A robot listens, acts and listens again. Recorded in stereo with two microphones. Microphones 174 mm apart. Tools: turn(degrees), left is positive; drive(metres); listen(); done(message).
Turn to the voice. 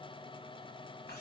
listen()
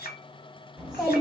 turn(degrees=-30)
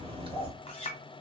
turn(degrees=-145)
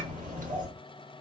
turn(degrees=-55)
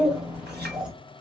done("Facing the child speaking, 1 to 2 m away.")